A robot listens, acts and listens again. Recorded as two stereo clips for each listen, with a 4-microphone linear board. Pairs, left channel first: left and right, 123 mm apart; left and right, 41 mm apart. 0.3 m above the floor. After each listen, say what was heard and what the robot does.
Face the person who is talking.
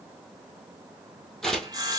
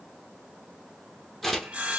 Keep listening.
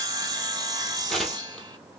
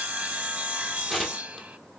Keep listening.
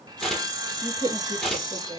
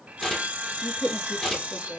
The woman speaking: about 40° left or 140° left. Turn 40° left.
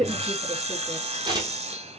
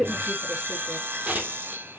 Found it: a woman speaking, straight ahead, 2 to 4 m away.